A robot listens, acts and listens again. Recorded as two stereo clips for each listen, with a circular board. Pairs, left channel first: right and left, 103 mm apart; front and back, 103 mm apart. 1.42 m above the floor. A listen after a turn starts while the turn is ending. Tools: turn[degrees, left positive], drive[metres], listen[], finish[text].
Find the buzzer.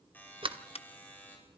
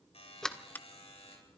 Thought: The buzzer: 15° right.
Action: turn[-15]
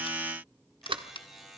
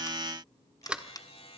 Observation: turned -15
Action: finish[Facing the buzzer, over 4 m away.]